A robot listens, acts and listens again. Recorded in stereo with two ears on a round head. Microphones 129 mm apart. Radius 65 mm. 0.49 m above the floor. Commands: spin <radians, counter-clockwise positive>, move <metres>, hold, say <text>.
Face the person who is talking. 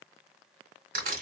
hold
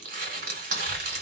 spin -0.61
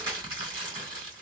spin -1.75
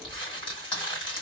spin -0.61
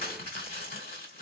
hold
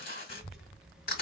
say Facing the child speaking, under 1 m away.